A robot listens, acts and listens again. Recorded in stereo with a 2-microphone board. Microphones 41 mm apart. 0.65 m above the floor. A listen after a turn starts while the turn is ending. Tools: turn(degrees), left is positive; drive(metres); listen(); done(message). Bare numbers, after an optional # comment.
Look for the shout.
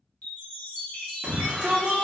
# The shout: about 30° right or 150° right.
turn(-30)
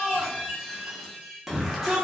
done("Facing the shout, under 1 m away.")